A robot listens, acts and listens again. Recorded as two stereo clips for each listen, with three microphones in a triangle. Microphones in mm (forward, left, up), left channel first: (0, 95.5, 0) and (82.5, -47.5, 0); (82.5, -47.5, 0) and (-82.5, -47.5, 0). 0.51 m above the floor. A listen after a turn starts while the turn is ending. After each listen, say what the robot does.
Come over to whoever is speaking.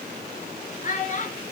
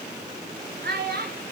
Turn 160° left.
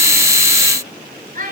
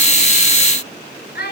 Turn 20° right.
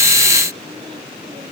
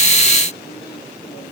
Keep listening.
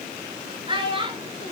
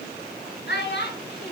Drive 1.0 m forward.
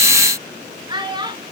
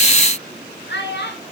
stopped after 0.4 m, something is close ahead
Something is in my way. I am facing the child speaking but have not reached it.